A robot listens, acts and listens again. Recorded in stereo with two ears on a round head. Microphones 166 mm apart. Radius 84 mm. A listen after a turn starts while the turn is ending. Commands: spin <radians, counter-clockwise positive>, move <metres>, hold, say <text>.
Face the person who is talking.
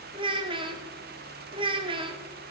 spin -0.52
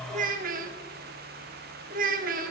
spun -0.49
spin -2.01
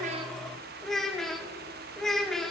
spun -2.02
say Facing the child speaking, 1 to 2 m away.